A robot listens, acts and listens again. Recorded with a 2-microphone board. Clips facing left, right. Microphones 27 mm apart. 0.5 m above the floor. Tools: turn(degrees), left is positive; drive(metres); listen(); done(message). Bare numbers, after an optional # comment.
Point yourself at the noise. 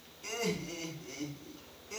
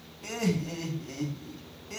# The laughter: about 55° right or 125° right.
turn(-55)
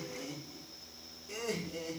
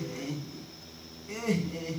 # So it is at 65° right.
turn(-65)
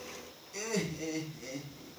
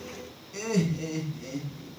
# The laughter is now 15° right.
turn(-15)
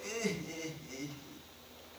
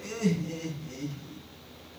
done("Found it: laughter, straight ahead, over 4 m away.")